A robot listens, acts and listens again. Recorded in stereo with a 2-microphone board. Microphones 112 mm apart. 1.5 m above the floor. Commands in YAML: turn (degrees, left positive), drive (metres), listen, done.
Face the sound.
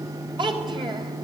turn: -45
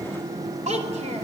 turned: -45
turn: -100
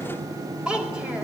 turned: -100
turn: -10
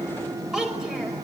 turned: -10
done: "Facing the child speaking."